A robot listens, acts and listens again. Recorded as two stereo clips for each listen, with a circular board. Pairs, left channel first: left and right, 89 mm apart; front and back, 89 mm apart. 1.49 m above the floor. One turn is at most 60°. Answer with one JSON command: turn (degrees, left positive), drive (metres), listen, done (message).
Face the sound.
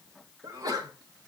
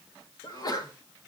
{"turn": -45}
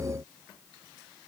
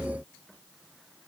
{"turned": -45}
{"done": "I heard a sneeze from this way, but can't make it out now."}